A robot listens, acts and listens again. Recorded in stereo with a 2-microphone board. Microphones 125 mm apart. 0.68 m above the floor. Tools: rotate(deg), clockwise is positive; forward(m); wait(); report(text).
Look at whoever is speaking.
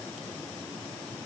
wait()
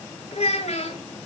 rotate(-55)
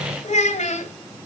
rotate(-70)
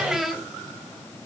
report("Found it: a child speaking, straight ahead.")